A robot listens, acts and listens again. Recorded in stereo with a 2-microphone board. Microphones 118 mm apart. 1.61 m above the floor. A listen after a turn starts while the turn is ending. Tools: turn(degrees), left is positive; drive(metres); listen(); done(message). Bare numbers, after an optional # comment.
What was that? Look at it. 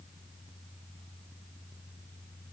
listen()
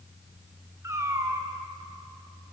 # The cat meowing: about 25° right or 155° right.
turn(-25)
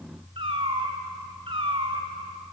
# So it is at 130° right.
turn(-130)
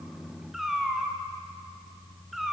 done("Found it: a cat meowing, straight ahead.")